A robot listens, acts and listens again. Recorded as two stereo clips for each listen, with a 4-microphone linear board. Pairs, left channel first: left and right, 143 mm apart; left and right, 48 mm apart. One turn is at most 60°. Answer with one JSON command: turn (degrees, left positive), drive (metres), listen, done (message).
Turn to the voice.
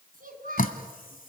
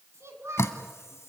{"turn": -60}
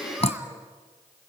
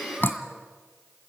{"listen": true}
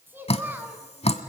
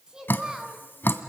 {"turn": -15}
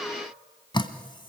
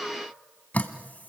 {"listen": true}
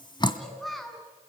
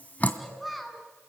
{"done": "Facing the child speaking, 2 to 4 m away."}